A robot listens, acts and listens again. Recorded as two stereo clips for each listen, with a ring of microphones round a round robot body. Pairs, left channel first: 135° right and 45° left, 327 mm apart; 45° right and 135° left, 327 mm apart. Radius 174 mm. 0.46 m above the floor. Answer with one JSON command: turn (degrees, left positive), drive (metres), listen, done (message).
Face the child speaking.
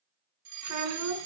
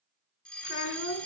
{"done": "Found it: a child speaking, straight ahead."}